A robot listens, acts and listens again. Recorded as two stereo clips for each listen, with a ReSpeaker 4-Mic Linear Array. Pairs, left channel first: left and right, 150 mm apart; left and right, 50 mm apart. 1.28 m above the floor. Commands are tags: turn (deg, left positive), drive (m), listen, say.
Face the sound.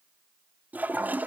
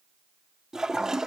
<turn deg="-30"/>
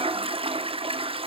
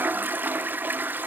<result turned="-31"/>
<turn deg="-140"/>
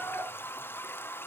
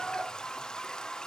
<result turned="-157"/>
<turn deg="15"/>
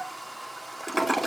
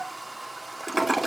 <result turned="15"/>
<say>Found it: a toilet flushing, straight ahead, under 1 m away.</say>